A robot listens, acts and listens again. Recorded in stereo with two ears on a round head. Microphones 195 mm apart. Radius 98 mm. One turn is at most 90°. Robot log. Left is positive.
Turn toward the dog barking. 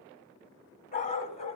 note: The dog barking: about 30° left or 150° left.
cmd yaw +30
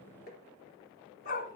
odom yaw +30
note: The dog barking: about 40° left or 140° left.
cmd yaw +40
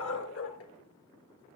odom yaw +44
note: So it is at 110° left.
cmd yaw +90
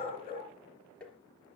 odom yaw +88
note: The dog barking is now 25° left.
cmd yaw +25
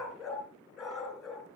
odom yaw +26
end: Facing the dog barking.